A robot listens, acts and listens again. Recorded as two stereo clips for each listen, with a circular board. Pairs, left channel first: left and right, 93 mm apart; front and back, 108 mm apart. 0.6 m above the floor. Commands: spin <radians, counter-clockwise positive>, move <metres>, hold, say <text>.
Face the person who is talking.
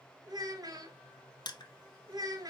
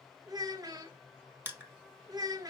spin -2.27
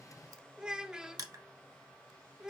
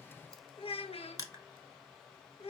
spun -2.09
spin -0.17
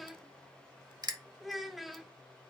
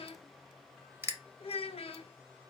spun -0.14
say Found it: a child speaking, straight ahead, under 1 m away.